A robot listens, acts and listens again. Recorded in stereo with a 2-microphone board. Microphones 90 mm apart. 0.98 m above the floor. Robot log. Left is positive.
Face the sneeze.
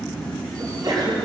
note: The sneeze: about 45° right or 135° right.
cmd yaw -45
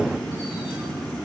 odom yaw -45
cmd idle
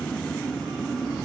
end: I heard a sneeze, but can't make it out now. It was about straight ahead or 90° right.